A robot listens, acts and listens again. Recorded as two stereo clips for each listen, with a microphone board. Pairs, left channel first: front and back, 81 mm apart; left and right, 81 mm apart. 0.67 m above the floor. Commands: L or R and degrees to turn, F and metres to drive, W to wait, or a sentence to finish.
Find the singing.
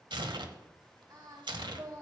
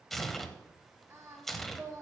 R140
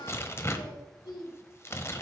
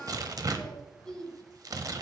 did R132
Facing the singing, 2 to 4 m away.